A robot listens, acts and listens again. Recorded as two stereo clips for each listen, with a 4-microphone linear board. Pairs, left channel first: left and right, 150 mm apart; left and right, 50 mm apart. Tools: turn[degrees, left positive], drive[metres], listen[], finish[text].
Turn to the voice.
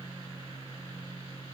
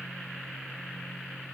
Action: listen[]
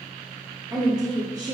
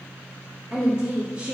Thought: The woman speaking: about 25° right or 155° right.
Action: turn[-25]
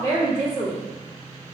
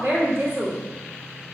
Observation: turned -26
Thought: So it is at 130° right.
Action: turn[-130]
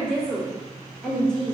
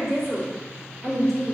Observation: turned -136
Action: finish[Found it: a woman speaking, straight ahead.]